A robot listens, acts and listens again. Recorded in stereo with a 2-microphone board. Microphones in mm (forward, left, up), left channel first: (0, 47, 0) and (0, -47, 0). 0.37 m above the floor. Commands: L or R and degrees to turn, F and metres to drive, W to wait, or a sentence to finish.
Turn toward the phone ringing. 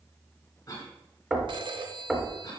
R55
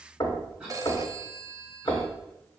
R45
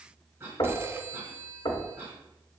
R30
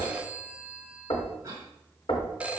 R15
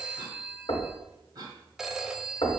Found it: a phone ringing, straight ahead.